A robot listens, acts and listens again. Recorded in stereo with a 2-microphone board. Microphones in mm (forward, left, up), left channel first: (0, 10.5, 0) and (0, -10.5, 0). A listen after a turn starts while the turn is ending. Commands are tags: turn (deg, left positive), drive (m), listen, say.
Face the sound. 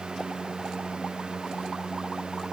<listen/>
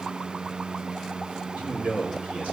<turn deg="-75"/>
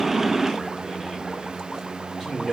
<turn deg="-20"/>
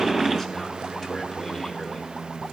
<listen/>
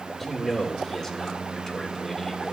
<say>Found it: a man speaking, straight ahead, 2 to 4 m away.</say>